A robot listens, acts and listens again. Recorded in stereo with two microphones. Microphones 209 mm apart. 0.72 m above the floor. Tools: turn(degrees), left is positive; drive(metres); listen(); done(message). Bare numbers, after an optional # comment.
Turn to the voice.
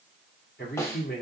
# The man speaking: about 50° left or 130° left.
turn(50)
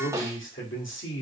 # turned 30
# So it is at 95° left.
turn(95)
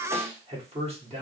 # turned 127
# The man speaking is now 30° right.
turn(-30)
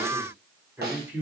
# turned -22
# The man speaking is now 10° right.
turn(-10)
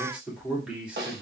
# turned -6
done("Facing the man speaking, 1 to 2 m away.")